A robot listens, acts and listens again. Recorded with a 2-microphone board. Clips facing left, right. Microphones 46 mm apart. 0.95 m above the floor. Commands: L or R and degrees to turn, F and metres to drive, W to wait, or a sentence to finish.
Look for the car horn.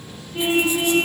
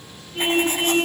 L30
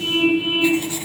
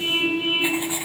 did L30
R15
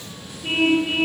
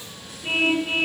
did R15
Facing the car horn.